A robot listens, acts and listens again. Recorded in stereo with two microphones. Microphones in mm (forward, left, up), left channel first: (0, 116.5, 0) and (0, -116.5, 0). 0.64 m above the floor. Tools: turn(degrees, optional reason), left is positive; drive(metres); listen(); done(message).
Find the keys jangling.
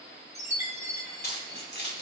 turn(degrees=50, reason="The keys jangling: about 50° left or 130° left.")
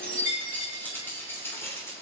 turn(degrees=10, reason="So it is at 10° left.")
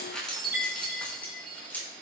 turn(degrees=10, reason="The keys jangling is now 10° left.")
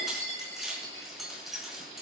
done("Found it: keys jangling, straight ahead, over 4 m away.")